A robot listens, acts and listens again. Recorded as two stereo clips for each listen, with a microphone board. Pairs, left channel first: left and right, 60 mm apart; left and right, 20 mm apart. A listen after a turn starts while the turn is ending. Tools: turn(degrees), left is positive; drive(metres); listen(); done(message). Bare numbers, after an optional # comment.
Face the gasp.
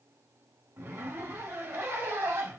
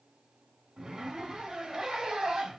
listen()
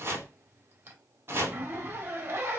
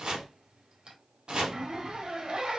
listen()
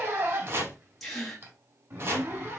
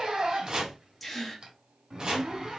turn(30)
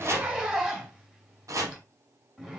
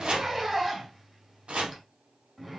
listen()
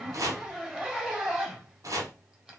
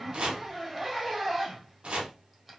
done("I heard a gasp, but can't make it out now. It was about 25° right or 145° left.")